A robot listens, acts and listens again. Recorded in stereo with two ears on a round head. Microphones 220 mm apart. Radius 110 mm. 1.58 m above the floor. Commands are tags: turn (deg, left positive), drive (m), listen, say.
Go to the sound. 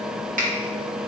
<turn deg="-35"/>
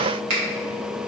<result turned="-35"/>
<turn deg="-115"/>
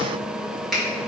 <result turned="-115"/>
<drive m="1.0"/>
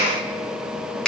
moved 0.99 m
<drive m="1.0"/>
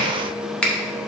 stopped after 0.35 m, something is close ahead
<say>I am next to the finger snap.</say>